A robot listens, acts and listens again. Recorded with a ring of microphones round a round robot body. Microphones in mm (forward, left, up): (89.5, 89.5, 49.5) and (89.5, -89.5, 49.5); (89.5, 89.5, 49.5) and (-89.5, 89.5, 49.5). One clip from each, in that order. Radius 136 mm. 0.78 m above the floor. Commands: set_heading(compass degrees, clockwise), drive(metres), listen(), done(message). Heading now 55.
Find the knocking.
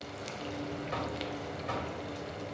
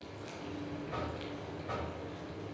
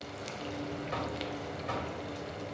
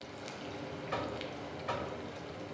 set_heading(290)
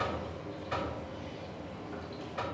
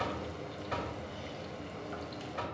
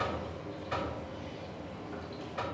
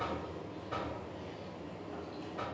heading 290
set_heading(300)
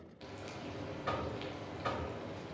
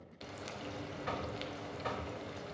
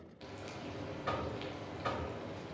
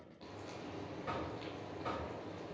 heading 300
done("Found it: knocking, straight ahead.")